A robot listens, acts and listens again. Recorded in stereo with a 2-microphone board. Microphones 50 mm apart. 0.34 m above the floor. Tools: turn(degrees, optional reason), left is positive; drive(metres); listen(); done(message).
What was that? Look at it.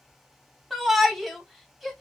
turn(degrees=30)
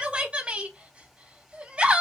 turn(degrees=-25, reason="So it is at 25° right.")
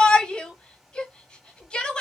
turn(degrees=25, reason="The shout is now 25° left.")
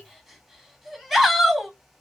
done("Facing the shout.")